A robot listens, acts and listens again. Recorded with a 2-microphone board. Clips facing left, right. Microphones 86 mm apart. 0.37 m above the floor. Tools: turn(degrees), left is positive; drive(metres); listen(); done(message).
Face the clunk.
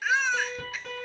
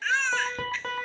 listen()
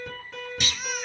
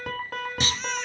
turn(degrees=-35)
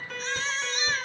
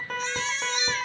listen()
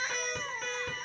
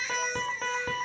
done("I heard a clunk, but can't make it out now. It was about straight ahead or 110° right.")